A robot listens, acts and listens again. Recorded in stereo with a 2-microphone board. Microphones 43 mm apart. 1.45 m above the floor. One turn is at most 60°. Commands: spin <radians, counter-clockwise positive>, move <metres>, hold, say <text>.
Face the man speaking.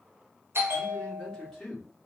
spin 0.52
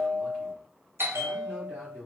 spin -0.35
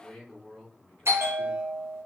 say Found it: a man speaking, straight ahead.